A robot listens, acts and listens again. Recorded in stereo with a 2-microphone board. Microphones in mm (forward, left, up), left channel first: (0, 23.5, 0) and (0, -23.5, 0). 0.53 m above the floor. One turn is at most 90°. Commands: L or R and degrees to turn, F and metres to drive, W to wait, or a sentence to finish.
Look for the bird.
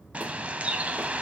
R30
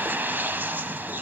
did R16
R90
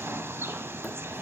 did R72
R65
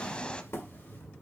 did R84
L20
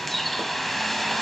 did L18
Found it: a bird, straight ahead.